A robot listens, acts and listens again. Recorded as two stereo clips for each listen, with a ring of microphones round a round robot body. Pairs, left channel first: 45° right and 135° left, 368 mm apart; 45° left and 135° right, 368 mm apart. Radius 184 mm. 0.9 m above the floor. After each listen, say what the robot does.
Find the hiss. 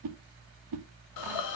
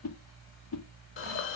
Turn 10° right.
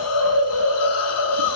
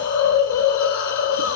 Found it: a hiss, straight ahead.